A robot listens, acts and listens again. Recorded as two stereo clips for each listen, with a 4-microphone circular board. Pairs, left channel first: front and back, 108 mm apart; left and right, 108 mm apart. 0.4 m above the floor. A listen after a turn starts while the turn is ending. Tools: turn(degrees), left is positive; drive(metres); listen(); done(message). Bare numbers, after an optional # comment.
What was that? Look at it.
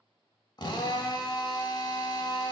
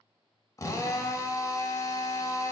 # The drill: 40° left.
turn(40)
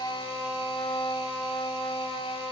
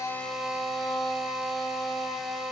done("Found it: a drill, straight ahead, under 1 m away.")